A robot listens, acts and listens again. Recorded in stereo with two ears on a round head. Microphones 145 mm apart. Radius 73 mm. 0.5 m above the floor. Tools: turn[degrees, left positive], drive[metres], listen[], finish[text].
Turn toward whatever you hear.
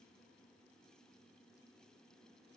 Action: listen[]
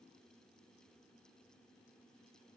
Action: listen[]
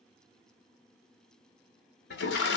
Action: turn[90]
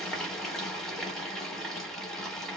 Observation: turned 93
Action: finish[Facing the toilet flushing, under 1 m away.]